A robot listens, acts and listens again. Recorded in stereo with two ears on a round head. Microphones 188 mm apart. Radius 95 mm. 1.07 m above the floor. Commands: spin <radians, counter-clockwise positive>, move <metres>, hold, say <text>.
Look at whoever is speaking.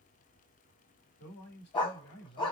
spin 0.96
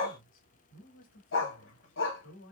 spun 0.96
spin 1.13
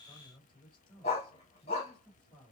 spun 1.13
say Facing the man speaking.